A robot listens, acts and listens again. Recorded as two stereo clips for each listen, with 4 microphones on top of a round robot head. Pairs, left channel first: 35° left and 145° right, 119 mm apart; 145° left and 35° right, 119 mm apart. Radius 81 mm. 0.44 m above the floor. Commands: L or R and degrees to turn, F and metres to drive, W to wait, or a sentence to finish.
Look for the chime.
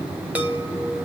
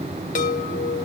L140
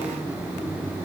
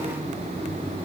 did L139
W
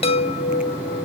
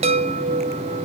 Found it: a chime, straight ahead, 1 to 2 m away.